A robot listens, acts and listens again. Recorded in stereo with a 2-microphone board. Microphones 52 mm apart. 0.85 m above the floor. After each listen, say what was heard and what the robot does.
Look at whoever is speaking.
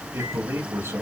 The man speaking: about 55° right or 125° right. Turn 55° right.
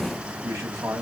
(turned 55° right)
So it is at 70° right. Turn 70° right.
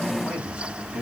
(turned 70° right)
The man speaking is now 20° right. Turn 20° right.
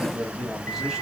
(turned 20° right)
Found it: a man speaking, straight ahead, 2 to 4 m away.